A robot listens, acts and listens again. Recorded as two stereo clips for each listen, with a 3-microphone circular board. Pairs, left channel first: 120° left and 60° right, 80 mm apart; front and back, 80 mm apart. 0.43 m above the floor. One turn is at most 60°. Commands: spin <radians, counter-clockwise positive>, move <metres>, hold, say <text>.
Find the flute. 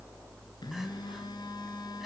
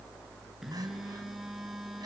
hold
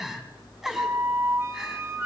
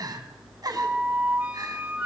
spin -1.05
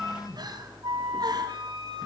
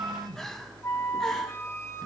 spin -0.87
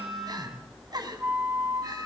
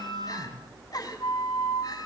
say Found it: a flute, straight ahead, 2 to 4 m away.